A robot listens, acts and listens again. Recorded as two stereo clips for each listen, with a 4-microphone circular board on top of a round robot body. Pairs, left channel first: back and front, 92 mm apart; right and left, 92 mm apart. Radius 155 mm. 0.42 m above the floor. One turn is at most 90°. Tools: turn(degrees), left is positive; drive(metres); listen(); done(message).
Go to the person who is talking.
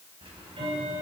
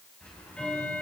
listen()
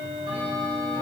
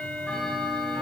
listen()
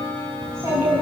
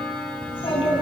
turn(degrees=-65)
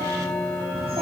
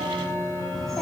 drive(metres=1.0)
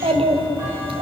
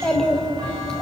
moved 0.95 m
drive(metres=1.0)
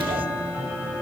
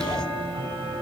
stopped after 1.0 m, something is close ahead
listen()
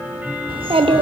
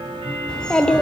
turn(degrees=-10)
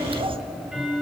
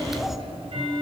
done("Arrived at the child speaking, straight ahead.")